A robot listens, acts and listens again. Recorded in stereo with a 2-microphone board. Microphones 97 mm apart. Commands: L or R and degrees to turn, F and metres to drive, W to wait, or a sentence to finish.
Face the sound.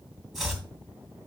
R30
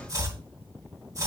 R145
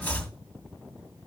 L15
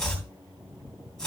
Found it: chopping, straight ahead, 2 to 4 m away.